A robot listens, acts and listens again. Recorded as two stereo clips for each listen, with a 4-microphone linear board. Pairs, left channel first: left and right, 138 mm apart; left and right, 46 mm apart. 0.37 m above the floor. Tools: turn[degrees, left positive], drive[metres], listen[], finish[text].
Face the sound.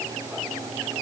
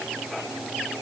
Action: listen[]
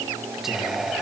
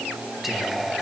Action: turn[-30]
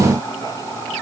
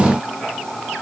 Thought: So it is at 25° left.
Action: turn[25]
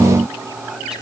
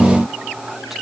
Action: listen[]
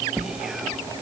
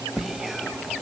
Action: finish[Facing the whispering.]